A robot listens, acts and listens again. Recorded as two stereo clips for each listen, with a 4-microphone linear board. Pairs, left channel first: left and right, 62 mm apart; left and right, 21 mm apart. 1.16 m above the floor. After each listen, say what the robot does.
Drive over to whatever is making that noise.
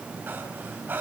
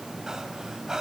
Turn 30° right.
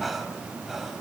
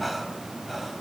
Drive 1.0 m forward.
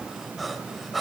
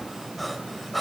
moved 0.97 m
Drive 1.0 m forward.
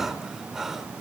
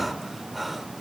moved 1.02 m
Drive 1.0 m forward.
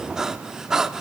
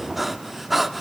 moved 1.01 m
Turn 10° right.
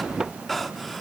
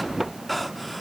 Drive 1.0 m forward.
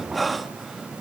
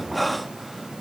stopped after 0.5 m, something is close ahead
I am next to the breathing.